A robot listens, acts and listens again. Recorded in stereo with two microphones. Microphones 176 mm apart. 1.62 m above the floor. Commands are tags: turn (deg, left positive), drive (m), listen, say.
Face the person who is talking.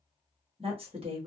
<turn deg="-35"/>
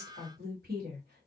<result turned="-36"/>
<turn deg="-110"/>
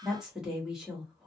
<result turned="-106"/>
<say>Facing the woman speaking.</say>